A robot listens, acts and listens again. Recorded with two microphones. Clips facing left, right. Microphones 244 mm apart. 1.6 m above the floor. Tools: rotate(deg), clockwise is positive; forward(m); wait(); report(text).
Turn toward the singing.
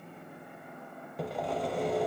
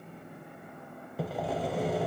wait()
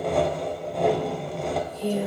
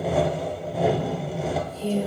rotate(-15)
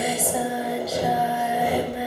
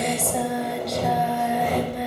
report("Found it: singing, straight ahead, 1 to 2 m away.")